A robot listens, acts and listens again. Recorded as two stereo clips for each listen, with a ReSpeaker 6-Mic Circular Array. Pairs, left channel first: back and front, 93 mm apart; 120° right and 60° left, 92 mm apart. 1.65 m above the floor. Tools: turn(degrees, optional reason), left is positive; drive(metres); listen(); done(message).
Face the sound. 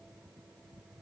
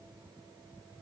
listen()
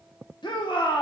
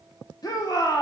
turn(degrees=-160, reason="The shout: 160° right.")
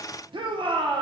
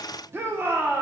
done("Found it: a shout, straight ahead, 1 to 2 m away.")